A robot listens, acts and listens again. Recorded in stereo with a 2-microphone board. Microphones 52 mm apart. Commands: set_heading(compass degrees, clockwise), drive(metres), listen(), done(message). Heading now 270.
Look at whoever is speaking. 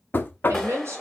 set_heading(340)
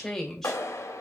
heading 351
done("Found it: a woman speaking, straight ahead.")